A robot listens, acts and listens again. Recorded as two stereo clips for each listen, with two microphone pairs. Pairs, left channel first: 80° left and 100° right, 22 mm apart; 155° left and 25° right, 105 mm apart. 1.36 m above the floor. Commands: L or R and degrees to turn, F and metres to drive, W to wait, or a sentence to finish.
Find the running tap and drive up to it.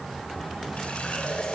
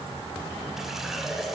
L60
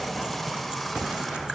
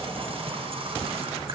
F1.0
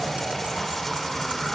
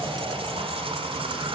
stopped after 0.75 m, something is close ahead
Something is in my way. I am facing the running tap but have not reached it.